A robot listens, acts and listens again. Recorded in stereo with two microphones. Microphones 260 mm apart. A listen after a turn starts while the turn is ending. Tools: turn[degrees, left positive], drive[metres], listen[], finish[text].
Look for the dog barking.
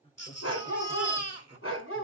Thought: The dog barking: about 50° left or 130° left.
Action: turn[50]
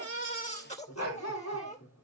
Thought: So it is at 85° left.
Action: turn[85]
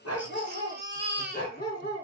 Thought: The dog barking is now 40° left.
Action: turn[40]
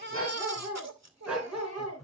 Action: finish[Found it: a dog barking, straight ahead.]